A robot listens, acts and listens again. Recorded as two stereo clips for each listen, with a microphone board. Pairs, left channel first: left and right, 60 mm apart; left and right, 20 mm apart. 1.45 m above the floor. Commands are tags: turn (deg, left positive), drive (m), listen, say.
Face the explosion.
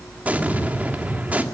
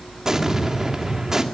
<turn deg="-25"/>
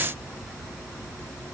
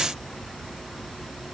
<listen/>
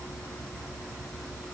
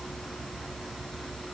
<say>I heard an explosion, but can't make it out now. It was about straight ahead or 130° right.</say>